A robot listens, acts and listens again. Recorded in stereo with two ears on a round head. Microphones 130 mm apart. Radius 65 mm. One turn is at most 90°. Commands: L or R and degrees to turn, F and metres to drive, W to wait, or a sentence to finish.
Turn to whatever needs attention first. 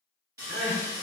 R55
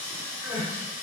R10
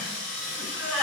Facing the crying, 1 to 2 m away.